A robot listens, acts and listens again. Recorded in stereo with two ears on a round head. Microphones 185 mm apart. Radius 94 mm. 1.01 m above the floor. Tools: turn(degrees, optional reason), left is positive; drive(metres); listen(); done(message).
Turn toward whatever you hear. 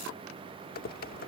turn(degrees=45, reason="The typing on a keyboard: about 45° left or 135° left.")
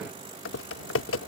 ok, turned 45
turn(degrees=80, reason="So it is at 80° left.")
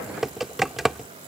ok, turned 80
done("Found it: typing on a keyboard, straight ahead.")